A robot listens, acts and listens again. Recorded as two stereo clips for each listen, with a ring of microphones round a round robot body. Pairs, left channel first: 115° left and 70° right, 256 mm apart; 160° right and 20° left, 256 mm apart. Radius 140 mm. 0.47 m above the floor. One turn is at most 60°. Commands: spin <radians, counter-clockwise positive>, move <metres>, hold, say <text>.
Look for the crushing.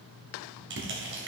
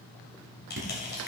spin -1.05
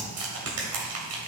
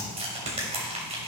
spin -0.79
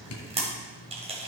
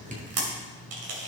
say Facing the crushing, 2 to 4 m away.